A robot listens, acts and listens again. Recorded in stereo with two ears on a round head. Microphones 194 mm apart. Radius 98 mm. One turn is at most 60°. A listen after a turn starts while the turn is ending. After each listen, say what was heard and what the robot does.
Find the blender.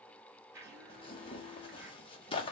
Turn 30° right.
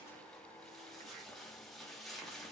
Keep listening.
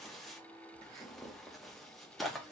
Keep listening.
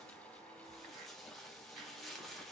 I heard a blender, but can't make it out now. It was about 20° left or 140° right.